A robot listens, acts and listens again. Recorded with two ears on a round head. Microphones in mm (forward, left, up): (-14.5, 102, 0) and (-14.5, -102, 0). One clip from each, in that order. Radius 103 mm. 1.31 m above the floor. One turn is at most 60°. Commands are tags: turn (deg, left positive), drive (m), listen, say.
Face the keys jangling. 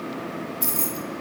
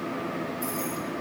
<turn deg="50"/>
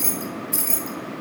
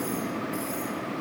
<turn deg="60"/>
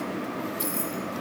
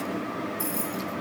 <turn deg="15"/>
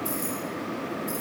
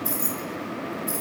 <turn deg="-20"/>
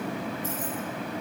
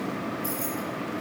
<listen/>
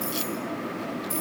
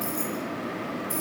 <say>Found it: keys jangling, straight ahead.</say>